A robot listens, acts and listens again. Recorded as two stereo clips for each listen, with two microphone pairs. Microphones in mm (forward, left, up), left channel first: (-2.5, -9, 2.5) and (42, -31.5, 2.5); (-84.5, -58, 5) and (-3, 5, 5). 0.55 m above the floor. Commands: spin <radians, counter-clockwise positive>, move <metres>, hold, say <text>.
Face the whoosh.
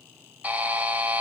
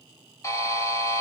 hold
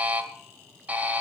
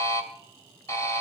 hold
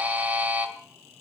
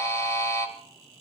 say I can't make out a whoosh to turn to.